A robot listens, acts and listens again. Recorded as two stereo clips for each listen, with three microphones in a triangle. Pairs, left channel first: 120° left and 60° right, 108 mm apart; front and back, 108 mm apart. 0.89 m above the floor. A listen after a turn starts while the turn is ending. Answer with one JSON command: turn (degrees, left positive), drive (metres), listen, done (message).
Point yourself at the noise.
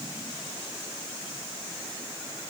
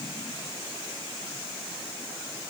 {"listen": true}
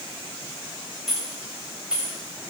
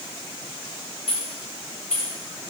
{"turn": 20}
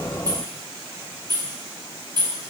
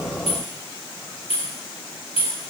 {"turn": -20}
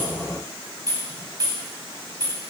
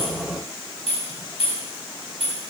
{"done": "Found it: keys jangling, straight ahead."}